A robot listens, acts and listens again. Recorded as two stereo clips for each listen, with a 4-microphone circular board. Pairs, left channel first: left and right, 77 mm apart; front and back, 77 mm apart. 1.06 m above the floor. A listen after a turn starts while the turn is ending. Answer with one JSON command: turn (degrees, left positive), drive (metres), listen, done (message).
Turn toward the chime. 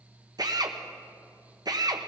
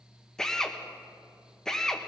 {"listen": true}
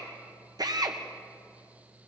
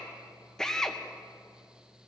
{"listen": true}
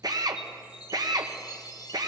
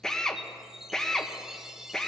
{"turn": 100}
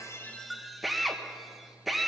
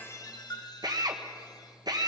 {"done": "Found it: a chime, straight ahead."}